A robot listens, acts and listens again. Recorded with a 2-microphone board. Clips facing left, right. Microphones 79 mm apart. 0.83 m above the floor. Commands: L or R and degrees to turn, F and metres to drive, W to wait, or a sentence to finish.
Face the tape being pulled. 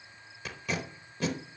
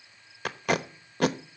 R65
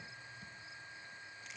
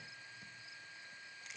W
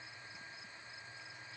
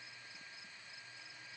W
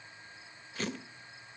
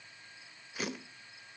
R10
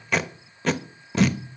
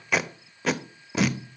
Found it: tape being pulled, straight ahead, under 1 m away.